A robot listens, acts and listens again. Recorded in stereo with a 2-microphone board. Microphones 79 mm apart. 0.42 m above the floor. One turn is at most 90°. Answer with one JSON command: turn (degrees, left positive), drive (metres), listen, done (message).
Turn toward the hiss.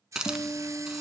{"turn": -30}
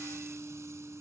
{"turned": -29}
{"listen": true}
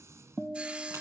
{"listen": true}
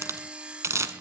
{"turn": -90}
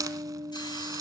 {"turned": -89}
{"turn": -55}
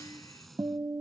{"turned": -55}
{"listen": true}
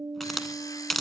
{"done": "Facing the hiss, under 1 m away."}